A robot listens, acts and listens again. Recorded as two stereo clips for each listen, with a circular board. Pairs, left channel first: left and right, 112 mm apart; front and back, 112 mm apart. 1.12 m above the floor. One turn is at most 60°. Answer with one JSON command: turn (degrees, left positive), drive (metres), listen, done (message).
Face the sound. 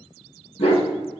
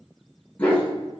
{"turn": 60}
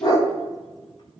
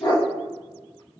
{"turn": 40}
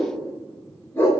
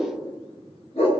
{"turn": 20}
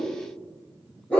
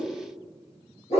{"turn": 10}
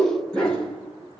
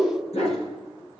{"done": "Found it: a dog barking, straight ahead, over 4 m away."}